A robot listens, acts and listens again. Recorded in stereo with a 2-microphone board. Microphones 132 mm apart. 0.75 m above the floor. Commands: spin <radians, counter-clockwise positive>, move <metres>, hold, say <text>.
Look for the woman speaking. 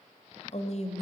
spin 0.96
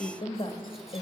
spin 0.87
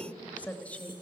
spin 0.26
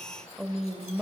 say Facing the woman speaking.